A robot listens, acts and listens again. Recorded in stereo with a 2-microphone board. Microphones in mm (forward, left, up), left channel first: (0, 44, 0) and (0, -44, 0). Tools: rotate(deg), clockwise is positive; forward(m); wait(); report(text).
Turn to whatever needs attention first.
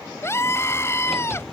rotate(-30)
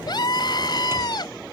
rotate(-120)
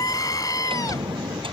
rotate(-50)
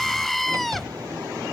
report("Found it: a scream, straight ahead.")